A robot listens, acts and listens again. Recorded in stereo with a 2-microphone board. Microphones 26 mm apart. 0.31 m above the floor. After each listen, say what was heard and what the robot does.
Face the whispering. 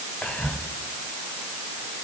The whispering: about 55° left or 125° left. Turn 55° left.
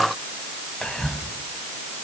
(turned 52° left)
So it is at 40° left. Turn 40° left.
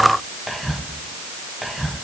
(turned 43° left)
Facing the whispering.